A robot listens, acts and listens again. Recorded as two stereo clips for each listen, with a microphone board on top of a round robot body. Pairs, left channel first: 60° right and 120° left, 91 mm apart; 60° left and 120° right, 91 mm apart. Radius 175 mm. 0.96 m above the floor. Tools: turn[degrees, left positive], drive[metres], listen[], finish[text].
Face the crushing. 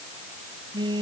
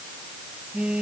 Action: listen[]
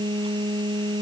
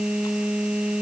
Action: listen[]
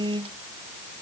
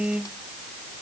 Action: finish[I can't make out crushing, only a phone buzzing.]